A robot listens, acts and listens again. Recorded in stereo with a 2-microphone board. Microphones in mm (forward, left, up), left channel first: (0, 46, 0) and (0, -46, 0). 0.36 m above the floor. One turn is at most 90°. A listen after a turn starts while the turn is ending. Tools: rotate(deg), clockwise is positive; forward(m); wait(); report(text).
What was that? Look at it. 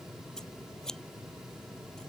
rotate(-30)
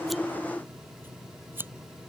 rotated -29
rotate(20)
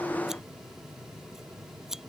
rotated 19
report("Facing the scissors.")